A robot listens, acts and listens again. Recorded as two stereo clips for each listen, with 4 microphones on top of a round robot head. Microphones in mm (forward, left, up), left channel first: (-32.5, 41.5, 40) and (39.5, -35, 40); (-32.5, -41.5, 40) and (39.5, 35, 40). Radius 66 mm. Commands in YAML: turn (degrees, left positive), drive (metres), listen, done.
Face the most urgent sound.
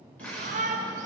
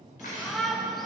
turn: -45
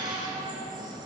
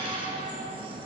done: "Found it: a shout, straight ahead."